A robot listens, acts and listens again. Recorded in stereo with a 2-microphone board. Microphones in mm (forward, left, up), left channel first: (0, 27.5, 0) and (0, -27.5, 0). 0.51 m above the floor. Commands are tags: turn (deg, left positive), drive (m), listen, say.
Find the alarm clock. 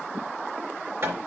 <listen/>
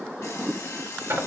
<turn deg="65"/>
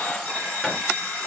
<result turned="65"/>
<say>Found it: an alarm clock, straight ahead.</say>